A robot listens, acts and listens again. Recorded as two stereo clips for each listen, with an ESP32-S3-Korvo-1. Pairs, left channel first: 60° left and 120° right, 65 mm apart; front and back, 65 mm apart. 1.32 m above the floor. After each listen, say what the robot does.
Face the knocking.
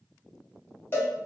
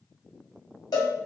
Keep listening.
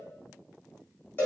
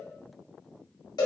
Keep listening.
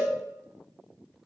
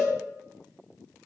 I can't make out knocking, only a cowbell.